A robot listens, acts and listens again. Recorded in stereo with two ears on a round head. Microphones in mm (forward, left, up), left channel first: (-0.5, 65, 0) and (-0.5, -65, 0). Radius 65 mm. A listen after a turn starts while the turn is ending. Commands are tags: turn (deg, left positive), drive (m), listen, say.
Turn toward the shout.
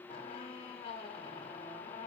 <listen/>
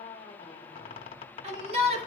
<turn deg="-45"/>
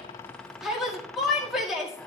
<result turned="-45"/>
<say>Facing the shout, 2 to 4 m away.</say>